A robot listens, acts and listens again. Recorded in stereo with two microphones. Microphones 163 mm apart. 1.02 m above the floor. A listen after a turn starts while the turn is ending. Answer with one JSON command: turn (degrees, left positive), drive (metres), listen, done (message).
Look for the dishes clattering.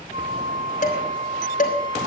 {"turn": 50}
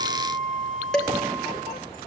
{"done": "Found it: dishes clattering, straight ahead, 2 to 4 m away."}